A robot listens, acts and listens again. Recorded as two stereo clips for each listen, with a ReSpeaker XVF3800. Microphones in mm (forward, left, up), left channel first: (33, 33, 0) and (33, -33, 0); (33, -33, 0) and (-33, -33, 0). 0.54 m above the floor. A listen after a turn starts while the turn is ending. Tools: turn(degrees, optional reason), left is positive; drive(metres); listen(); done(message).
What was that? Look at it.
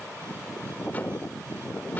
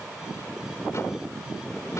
listen()
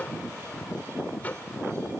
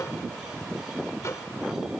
turn(degrees=30, reason="The microwave: 30° left.")
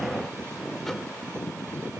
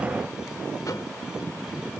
listen()
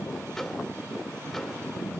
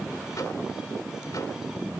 done("Facing the microwave, 1 to 2 m away.")